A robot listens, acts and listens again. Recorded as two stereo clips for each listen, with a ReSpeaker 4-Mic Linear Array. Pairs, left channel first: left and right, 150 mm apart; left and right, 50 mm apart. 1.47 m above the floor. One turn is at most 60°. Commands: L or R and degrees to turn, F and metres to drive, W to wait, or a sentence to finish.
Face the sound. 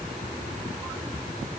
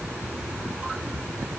W
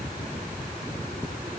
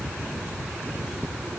W
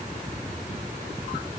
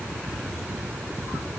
I can't make out anything to turn to.